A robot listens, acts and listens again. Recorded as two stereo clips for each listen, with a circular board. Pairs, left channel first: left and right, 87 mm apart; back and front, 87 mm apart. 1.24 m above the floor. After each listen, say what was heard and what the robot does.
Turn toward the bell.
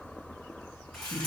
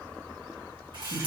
Keep listening.
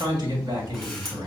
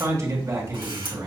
Keep listening.
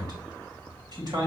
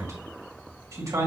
I can't make out a bell, only a man speaking and a camera shutter.